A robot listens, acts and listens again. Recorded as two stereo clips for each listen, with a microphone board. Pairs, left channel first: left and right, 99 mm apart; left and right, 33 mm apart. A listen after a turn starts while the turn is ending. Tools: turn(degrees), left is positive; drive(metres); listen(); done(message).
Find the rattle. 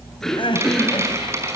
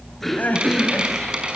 turn(degrees=-30)
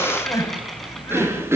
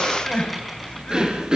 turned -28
listen()
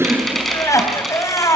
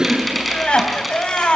done("Found it: a rattle, straight ahead.")